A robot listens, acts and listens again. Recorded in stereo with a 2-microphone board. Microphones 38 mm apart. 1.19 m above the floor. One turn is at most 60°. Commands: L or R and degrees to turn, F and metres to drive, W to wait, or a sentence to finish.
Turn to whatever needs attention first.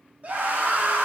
R40
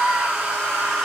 R60
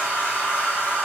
R40
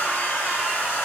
W
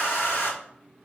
I heard a scream from this way, but can't make it out now.